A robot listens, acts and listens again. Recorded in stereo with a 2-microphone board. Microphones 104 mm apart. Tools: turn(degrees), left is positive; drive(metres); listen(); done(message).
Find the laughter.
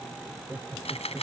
turn(degrees=-30)
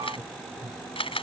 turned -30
turn(degrees=-140)
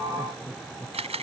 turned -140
turn(degrees=10)
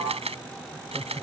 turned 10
done("Found it: laughter, straight ahead.")